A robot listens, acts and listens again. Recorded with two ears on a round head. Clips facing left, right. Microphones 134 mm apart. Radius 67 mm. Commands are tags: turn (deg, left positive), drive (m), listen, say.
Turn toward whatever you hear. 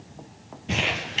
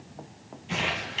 <turn deg="65"/>
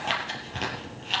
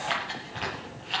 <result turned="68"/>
<turn deg="45"/>
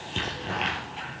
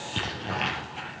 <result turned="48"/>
<say>Facing the crumpling, over 4 m away.</say>